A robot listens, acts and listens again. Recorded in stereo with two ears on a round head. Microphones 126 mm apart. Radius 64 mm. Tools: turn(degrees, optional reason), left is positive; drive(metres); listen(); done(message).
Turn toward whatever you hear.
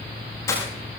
turn(degrees=20, reason="The breaking glass: about 20° left or 160° left.")
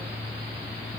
listen()
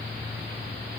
done("I heard breaking glass, but can't make it out now. It was about straight ahead or 140° left.")